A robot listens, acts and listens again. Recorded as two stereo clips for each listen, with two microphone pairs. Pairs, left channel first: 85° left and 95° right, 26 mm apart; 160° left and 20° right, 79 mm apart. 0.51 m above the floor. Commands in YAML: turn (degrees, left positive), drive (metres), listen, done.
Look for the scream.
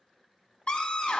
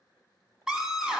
turn: 60
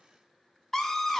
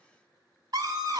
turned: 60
done: "Facing the scream, 1 to 2 m away."